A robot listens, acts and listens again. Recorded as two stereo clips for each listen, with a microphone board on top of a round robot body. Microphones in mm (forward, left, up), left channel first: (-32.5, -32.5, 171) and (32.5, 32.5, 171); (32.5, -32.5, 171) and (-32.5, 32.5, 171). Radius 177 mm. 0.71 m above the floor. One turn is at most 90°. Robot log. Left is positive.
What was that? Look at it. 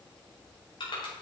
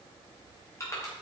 note: The crushing: 100° right.
cmd yaw -90
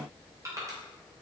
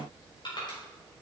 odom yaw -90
note: The crushing is now 10° right.
cmd yaw -10
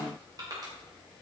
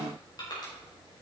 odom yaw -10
end: Facing the crushing.